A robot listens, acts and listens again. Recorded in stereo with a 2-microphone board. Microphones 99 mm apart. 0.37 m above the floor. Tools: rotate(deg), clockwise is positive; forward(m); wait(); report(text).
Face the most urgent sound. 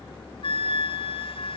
wait()
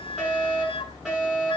rotate(30)
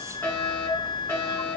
rotate(-20)
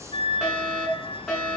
report("Facing the fire alarm, over 4 m away.")